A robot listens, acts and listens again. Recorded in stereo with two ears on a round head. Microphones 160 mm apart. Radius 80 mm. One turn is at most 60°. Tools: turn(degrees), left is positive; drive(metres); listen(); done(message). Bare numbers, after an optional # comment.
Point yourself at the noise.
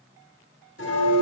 turn(60)
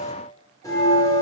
# So it is at 20° left.
turn(20)
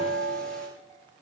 done("Found it: a bell, straight ahead, over 4 m away.")